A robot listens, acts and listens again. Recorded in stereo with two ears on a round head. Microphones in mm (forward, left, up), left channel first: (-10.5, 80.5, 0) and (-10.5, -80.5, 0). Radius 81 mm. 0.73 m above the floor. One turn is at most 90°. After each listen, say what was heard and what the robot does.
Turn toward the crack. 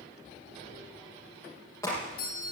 The crack: about 15° left or 165° left. Turn 15° left.
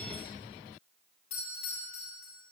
Keep listening.
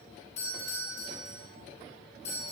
I heard a crack, but can't make it out now. It was about straight ahead or 150° left.